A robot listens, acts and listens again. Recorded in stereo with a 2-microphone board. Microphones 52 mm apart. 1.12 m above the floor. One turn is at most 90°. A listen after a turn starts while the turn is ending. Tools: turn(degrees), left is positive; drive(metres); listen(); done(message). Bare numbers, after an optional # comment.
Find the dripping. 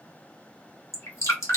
# The dripping: about 70° left or 110° left.
turn(70)
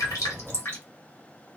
# So it is at 40° left.
turn(40)
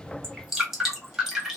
# The dripping is now 10° right.
turn(-10)
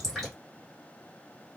listen()
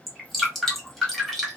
done("Found it: dripping, straight ahead, 1 to 2 m away.")